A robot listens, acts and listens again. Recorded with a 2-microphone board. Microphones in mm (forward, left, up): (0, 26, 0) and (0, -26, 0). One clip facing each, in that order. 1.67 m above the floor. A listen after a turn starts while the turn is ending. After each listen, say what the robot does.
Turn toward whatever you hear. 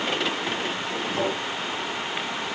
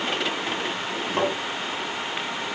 Turn 40° right.
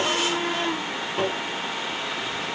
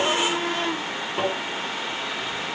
Turn 10° right.
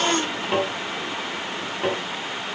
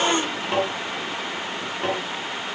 Facing the tapping.